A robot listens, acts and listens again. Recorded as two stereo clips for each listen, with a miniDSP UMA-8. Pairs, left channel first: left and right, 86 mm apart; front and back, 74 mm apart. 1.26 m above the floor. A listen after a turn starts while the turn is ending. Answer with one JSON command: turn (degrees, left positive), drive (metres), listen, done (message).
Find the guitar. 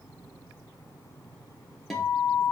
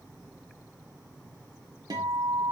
{"turn": 180}
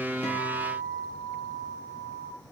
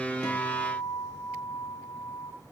{"done": "Facing the guitar, 1 to 2 m away."}